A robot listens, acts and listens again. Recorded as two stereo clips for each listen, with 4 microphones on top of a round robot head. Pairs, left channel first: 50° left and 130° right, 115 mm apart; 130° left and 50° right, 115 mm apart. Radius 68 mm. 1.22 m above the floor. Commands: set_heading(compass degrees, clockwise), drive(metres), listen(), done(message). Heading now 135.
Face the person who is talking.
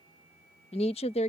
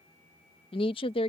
set_heading(50)
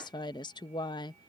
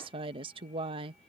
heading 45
done("Found it: a woman speaking, straight ahead.")